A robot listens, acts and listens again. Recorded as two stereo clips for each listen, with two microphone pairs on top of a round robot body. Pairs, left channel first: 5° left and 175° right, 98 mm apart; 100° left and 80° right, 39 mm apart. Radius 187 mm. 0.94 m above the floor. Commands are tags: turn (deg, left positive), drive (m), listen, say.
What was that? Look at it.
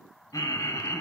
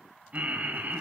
<turn deg="-45"/>
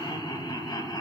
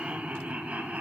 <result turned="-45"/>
<turn deg="-30"/>
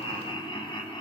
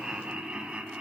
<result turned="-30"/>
<turn deg="-15"/>
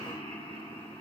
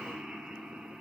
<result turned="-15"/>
<say>Facing the laughter, 2 to 4 m away.</say>